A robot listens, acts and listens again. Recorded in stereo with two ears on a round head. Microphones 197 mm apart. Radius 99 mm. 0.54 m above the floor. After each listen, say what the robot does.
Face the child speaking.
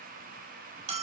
Keep listening.
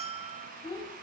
Turn 20° left.
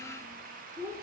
Turn 15° right.
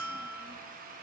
Keep listening.
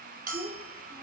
Turn 15° right.
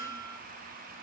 Keep listening.
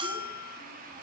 Keep listening.
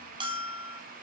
I heard a child speaking from this way, but can't make it out now.